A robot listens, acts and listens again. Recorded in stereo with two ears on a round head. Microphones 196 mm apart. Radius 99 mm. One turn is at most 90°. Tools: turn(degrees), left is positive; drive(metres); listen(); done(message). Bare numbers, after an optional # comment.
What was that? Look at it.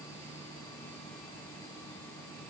listen()
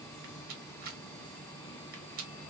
# The rattle: about 40° right or 140° right.
turn(-40)
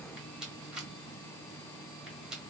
done("Facing the rattle, 1 to 2 m away.")